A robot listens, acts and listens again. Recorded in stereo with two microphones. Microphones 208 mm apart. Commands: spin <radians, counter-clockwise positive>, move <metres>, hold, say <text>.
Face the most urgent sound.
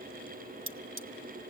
hold
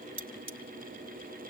hold
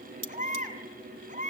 spin -0.70
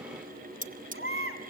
spin -1.75
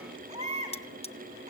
spin -0.52
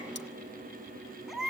say Facing the baby crying.